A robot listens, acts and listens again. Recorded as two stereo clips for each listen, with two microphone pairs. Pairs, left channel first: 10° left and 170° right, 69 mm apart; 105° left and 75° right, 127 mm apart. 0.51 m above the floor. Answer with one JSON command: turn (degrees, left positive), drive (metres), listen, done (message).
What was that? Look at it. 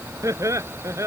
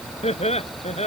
{"turn": 140}
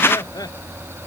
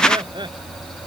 {"turn": -20}
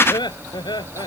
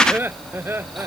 {"done": "Facing the laughter."}